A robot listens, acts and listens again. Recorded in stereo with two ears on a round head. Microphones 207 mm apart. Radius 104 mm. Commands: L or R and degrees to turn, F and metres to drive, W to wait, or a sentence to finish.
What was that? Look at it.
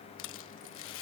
L60
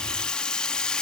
Facing the rattle.